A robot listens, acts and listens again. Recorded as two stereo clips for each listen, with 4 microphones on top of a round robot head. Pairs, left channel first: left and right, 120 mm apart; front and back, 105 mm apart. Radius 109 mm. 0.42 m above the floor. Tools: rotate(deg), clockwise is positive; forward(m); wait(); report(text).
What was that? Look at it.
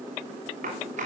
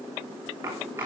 rotate(110)
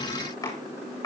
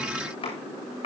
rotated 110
rotate(-30)
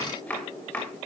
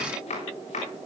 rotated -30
rotate(-10)
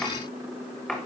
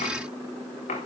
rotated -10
report("Facing the chopping, over 4 m away.")